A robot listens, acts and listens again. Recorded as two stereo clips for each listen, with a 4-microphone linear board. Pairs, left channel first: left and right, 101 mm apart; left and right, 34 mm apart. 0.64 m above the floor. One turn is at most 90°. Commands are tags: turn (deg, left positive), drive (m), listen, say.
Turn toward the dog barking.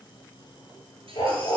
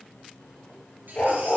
<turn deg="60"/>
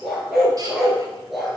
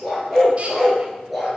<say>Found it: a dog barking, straight ahead, over 4 m away.</say>